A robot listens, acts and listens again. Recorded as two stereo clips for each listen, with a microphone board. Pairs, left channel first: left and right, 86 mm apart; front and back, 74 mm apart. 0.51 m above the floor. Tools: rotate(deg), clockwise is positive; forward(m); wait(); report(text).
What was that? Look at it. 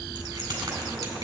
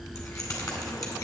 rotate(45)
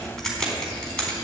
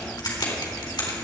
rotate(-10)
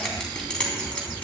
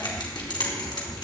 rotate(-10)
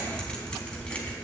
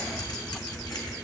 wait()
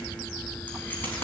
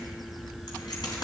rotate(-25)
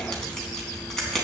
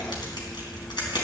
report("Facing the keys jangling.")